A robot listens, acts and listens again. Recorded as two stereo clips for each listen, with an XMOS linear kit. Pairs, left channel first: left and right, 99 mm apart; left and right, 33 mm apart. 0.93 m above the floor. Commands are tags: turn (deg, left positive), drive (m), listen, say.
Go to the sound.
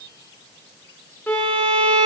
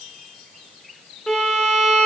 <turn deg="15"/>
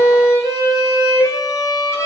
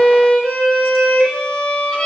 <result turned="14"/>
<turn deg="150"/>
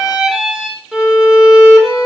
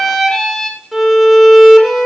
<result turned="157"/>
<drive m="1.0"/>
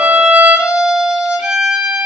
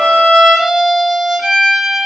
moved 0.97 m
<turn deg="-10"/>
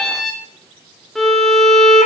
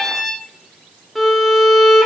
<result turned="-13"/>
<drive m="1.0"/>
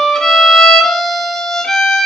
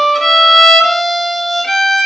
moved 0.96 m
<drive m="1.0"/>
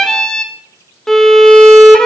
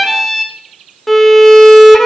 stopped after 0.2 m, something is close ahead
<say>Arrived at the violin, straight ahead.</say>